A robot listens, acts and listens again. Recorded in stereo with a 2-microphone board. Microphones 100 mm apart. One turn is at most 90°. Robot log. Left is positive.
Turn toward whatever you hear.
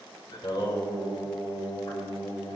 note: The singing: about 45° left or 135° left.
cmd yaw +45
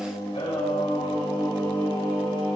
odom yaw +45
note: So it is at 80° left.
cmd yaw +80
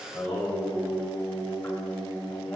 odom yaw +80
note: The singing is now 10° left.
cmd yaw +10
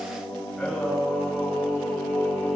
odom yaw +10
end: Found it: singing, straight ahead.